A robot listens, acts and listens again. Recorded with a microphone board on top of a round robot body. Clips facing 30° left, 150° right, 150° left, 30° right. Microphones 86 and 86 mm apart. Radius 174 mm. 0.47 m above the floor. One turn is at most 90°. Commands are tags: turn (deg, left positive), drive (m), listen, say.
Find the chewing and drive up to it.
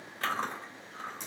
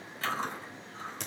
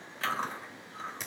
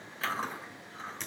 <turn deg="55"/>
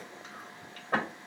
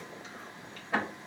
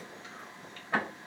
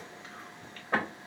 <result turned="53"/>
<drive m="1.0"/>
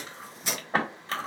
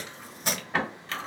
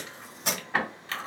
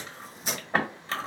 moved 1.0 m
<drive m="1.0"/>
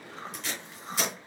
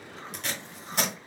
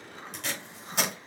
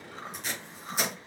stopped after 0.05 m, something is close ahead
<say>Arrived at the chewing, straight ahead.</say>